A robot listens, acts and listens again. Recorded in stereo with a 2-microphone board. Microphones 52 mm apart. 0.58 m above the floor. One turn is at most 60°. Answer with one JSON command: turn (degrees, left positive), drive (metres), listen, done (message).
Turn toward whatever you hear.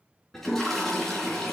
{"turn": 30}
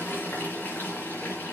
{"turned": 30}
{"turn": 60}
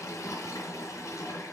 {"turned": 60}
{"turn": 60}
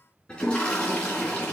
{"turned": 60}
{"turn": 20}
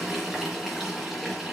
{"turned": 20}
{"done": "Found it: a toilet flushing, straight ahead, 2 to 4 m away."}